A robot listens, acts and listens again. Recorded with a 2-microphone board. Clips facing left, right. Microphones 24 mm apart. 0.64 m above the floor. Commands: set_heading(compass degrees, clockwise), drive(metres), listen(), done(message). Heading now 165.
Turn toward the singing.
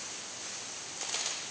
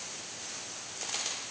listen()
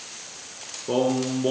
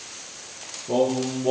set_heading(75)
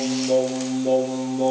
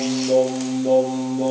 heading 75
done("Found it: singing, straight ahead, over 4 m away.")